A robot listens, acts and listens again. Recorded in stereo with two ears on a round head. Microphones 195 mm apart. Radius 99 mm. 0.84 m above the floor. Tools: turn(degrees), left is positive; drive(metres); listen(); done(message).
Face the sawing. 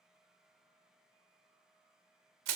listen()
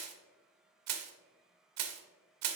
listen()
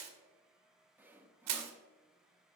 turn(degrees=-30)
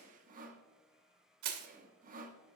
turn(degrees=-145)
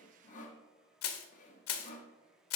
turn(degrees=30)
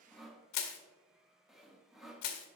done("Found it: sawing, straight ahead, under 1 m away.")